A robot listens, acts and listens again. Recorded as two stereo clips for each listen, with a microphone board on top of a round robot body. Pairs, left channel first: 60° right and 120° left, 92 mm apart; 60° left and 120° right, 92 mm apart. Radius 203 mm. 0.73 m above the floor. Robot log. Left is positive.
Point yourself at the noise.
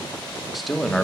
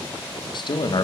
note: The man speaking: 25° left.
cmd yaw +25
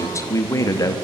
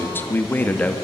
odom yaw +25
note: The man speaking is now 15° right.
cmd yaw -15
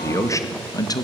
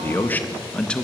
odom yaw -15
note: The man speaking is now 20° right.
cmd yaw -20
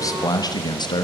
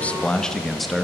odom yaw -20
note: The man speaking is now 35° right.
cmd yaw -35
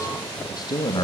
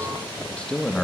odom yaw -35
note: The man speaking is now 25° right.
cmd yaw -25
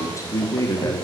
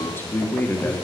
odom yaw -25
note: The man speaking is now 10° right.
cmd yaw -10
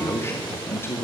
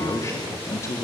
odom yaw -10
end: Facing the man speaking.